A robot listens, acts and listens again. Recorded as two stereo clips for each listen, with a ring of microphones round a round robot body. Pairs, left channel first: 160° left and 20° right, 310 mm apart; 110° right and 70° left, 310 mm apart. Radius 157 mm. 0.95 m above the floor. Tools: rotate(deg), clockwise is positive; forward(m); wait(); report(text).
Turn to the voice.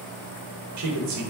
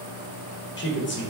rotate(60)
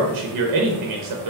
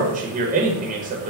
report("Found it: a man speaking, straight ahead, under 1 m away.")